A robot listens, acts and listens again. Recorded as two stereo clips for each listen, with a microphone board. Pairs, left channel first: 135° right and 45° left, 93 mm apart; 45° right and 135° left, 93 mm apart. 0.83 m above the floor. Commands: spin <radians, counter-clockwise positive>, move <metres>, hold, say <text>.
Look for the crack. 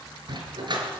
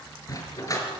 hold
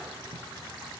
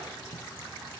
hold
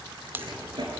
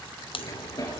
spin -0.44
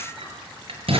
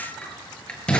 say I heard a crack from this way, but can't make it out now.